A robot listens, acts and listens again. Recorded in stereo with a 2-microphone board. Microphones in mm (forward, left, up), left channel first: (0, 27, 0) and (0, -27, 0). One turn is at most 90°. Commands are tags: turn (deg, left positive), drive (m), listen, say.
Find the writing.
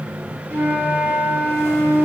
<listen/>
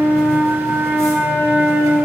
<listen/>
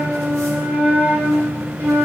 <say>I can't make out writing, only a flute.</say>